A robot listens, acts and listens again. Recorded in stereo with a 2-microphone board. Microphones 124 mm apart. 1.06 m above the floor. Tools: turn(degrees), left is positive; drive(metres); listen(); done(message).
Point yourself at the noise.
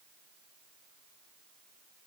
listen()
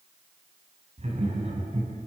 turn(degrees=-65)
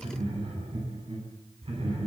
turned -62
turn(degrees=-50)
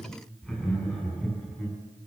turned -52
done("Found it: laughter, straight ahead.")